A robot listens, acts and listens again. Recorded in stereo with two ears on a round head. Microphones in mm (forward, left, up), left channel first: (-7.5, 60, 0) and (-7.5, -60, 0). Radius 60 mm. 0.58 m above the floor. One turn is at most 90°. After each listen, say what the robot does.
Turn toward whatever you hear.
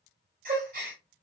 Turn 70° right.
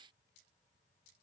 Keep listening.
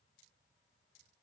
I heard a gasp, but can't make it out now. It was about straight ahead or 40° right.